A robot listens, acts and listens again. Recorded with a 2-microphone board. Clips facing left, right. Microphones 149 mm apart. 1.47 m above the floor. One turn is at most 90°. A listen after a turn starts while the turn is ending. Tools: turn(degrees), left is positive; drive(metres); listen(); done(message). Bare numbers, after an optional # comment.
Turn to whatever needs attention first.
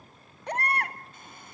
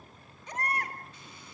# The baby crying: about 70° left or 110° left.
turn(70)
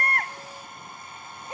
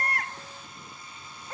# So it is at 20° left.
turn(20)
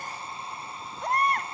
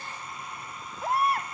done("Found it: a baby crying, straight ahead, 1 to 2 m away.")